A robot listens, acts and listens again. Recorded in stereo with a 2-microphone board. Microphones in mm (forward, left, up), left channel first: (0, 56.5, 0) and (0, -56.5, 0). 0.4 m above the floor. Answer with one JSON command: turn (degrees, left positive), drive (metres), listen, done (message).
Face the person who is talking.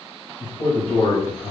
{"turn": 55}
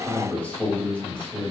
{"turn": 15}
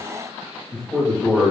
{"done": "Facing the man speaking, 1 to 2 m away."}